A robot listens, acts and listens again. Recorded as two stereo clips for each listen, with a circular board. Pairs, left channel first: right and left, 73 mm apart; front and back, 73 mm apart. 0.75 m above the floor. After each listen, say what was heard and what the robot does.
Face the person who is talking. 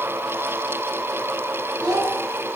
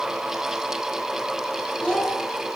The child speaking: 80° left. Turn 80° left.
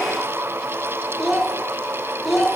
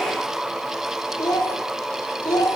Found it: a child speaking, straight ahead.